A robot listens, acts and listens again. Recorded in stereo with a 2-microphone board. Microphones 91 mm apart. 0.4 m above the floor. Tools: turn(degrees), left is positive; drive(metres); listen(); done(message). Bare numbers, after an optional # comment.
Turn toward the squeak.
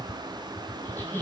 # The squeak: about 20° left or 160° left.
turn(20)
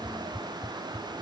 listen()
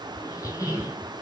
# So it is at 140° left.
turn(140)
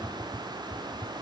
listen()
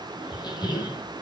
# The squeak is now 50° left.
turn(50)
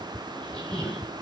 done("Found it: a squeak, straight ahead, 1 to 2 m away.")